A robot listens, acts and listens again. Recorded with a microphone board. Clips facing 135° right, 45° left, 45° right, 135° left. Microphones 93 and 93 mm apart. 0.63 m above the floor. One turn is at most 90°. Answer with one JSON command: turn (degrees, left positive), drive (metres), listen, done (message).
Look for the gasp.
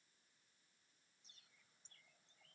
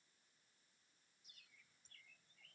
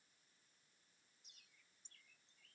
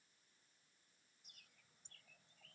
{"listen": true}
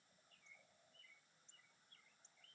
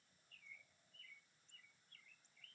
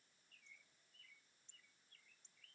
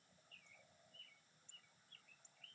{"listen": true}
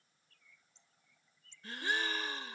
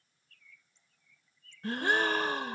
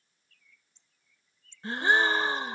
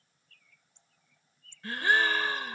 {"turn": 20}
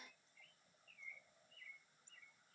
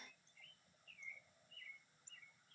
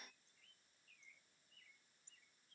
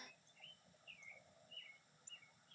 {"done": "I heard a gasp from this way, but can't make it out now."}